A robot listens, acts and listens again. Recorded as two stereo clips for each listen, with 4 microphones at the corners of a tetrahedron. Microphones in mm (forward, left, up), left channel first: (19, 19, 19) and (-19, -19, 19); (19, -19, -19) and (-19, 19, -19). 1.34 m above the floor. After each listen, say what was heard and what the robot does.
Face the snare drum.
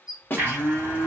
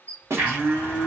The snare drum: 100° left. Turn 100° left.
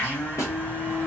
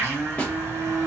Keep listening.
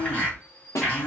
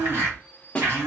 The snare drum is now 25° left. Turn 25° left.
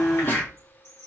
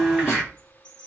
Keep listening.
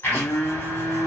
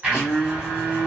Keep listening.
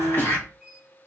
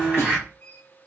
Facing where the snare drum came from. I can't hear it now.